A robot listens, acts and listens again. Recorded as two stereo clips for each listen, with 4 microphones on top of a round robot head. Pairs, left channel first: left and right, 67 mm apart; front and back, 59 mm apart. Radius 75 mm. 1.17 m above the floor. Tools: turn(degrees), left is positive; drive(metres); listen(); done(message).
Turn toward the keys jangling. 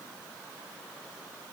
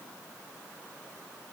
listen()
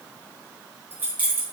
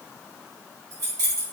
turn(degrees=-155)
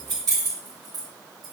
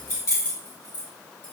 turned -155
turn(degrees=-50)
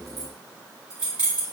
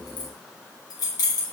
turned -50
turn(degrees=-15)
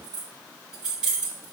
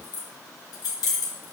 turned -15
turn(degrees=-10)
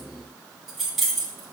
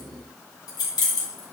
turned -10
done("Facing the keys jangling, 2 to 4 m away.")